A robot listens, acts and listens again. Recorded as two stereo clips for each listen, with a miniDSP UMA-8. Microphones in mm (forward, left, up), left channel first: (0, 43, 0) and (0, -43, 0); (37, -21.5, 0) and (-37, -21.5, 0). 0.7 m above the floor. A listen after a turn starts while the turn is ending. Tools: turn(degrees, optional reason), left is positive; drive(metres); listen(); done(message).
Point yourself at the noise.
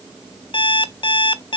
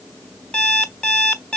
turn(degrees=80, reason="The alarm clock: 80° left.")
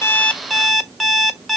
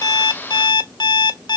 done("Facing the alarm clock, 1 to 2 m away.")